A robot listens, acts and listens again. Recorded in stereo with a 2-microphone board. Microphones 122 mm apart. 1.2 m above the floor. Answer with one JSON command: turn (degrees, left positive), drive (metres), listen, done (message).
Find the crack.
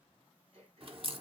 {"turn": -45}
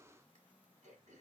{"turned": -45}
{"listen": true}
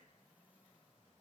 {"done": "I heard a crack, but can't make it out now. It was about straight ahead or 90° right."}